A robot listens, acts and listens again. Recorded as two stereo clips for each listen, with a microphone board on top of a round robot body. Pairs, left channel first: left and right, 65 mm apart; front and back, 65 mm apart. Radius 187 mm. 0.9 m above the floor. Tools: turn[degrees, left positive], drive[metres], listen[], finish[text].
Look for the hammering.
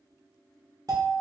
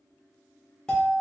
Action: listen[]
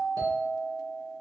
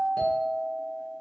Action: listen[]
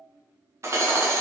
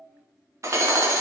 Thought: The hammering: 135° right.
Action: turn[-135]
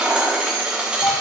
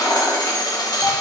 Thought: The hammering is now 15° right.
Action: turn[-15]
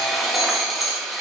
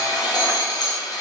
Action: finish[Facing the hammering.]